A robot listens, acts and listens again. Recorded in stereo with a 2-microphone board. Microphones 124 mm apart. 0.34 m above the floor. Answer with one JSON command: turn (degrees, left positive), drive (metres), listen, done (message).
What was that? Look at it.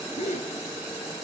{"turn": 90}
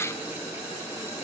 {"done": "I heard a gasp from this way, but can't make it out now."}